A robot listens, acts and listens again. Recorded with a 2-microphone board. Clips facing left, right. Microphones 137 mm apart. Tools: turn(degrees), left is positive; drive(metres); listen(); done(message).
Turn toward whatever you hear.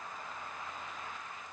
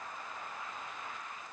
listen()
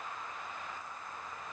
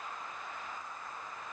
listen()
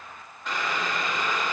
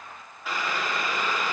turn(degrees=-30)
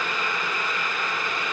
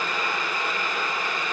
turn(degrees=-145)
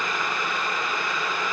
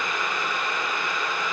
done("Facing the boiling.")